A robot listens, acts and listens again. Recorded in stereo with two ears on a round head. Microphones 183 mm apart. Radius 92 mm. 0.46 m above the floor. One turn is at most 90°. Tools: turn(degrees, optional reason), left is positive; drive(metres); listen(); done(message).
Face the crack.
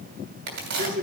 turn(degrees=-65, reason="The crack: about 65° right or 115° right.")
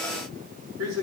listen()
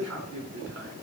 done("I heard a crack, but can't make it out now. It was about straight ahead or 50° right.")